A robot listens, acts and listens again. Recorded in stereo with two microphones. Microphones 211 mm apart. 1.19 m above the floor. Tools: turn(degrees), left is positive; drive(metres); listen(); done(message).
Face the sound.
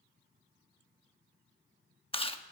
turn(degrees=25)
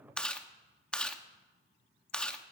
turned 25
done("Facing the chewing, under 1 m away.")